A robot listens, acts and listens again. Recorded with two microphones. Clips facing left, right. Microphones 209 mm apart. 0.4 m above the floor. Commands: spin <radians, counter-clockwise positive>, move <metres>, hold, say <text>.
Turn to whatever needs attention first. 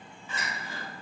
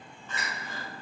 spin 0.52
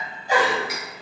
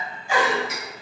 spin 2.44
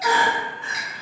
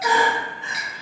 spin -0.35
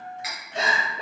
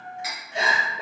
spin -0.17
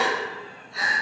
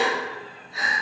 say Facing the crying, under 1 m away.